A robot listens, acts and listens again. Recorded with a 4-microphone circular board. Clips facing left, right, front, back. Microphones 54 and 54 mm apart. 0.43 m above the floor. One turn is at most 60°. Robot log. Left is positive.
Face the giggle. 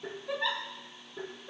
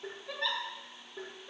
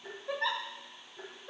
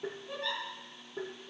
note: The giggle: 10° left.
cmd yaw +10
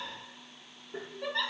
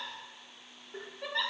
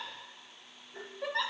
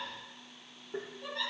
end: Facing the giggle.